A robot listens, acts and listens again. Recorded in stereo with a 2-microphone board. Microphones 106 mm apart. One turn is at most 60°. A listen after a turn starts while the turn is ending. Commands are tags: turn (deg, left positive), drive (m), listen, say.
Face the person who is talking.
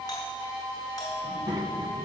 <turn deg="-45"/>
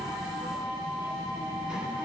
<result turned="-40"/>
<say>Facing the child speaking, 2 to 4 m away.</say>